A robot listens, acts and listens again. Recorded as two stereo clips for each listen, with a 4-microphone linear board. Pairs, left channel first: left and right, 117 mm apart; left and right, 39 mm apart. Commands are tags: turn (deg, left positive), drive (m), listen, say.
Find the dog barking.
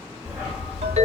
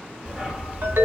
<turn deg="-30"/>
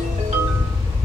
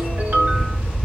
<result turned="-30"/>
<turn deg="-135"/>
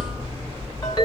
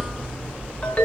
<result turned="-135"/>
<turn deg="-40"/>
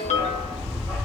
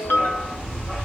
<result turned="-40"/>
<say>Found it: a dog barking, straight ahead.</say>